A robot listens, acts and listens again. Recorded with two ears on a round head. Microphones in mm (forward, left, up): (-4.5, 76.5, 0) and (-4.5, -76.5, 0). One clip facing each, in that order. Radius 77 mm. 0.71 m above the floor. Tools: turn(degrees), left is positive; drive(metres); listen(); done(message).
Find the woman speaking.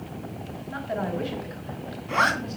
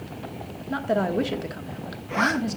turn(degrees=-60)
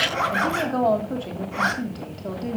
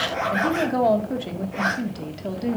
turn(degrees=-15)
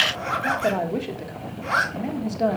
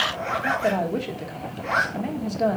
done("Found it: a woman speaking, straight ahead.")